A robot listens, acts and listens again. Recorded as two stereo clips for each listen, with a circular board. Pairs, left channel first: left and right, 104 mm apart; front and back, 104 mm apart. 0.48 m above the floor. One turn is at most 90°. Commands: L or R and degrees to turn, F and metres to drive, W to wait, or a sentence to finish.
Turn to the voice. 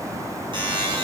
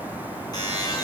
W
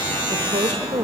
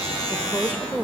R90
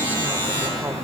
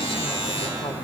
W
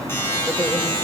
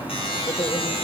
W
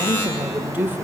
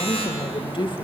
R20
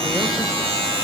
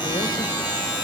W
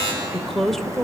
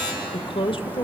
Facing the woman speaking, 1 to 2 m away.